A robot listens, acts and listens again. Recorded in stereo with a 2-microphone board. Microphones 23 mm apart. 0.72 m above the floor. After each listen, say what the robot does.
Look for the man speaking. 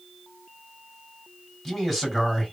Turn 30° left.
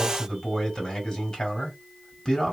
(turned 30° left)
Turn 140° left.
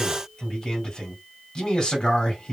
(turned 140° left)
Turn 45° left.
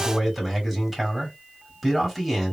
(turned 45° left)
Facing the man speaking, 1 to 2 m away.